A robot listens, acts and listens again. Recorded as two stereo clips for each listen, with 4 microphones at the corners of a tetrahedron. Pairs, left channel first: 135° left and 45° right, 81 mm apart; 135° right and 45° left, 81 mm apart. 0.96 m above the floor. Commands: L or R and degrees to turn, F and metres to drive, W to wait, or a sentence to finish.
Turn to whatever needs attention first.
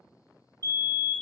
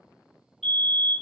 R45
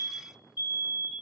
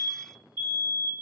Found it: a fire alarm, straight ahead.